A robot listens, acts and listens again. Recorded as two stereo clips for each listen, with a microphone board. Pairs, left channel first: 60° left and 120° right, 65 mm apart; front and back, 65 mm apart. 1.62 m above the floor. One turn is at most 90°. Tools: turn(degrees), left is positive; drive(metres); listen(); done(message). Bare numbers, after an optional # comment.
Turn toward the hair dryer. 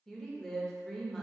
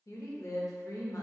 listen()
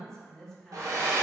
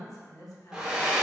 # The hair dryer: 105° right.
turn(-90)
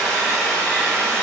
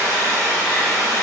# The hair dryer is now 10° right.
turn(-10)
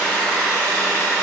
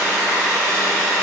done("Facing the hair dryer, 1 to 2 m away.")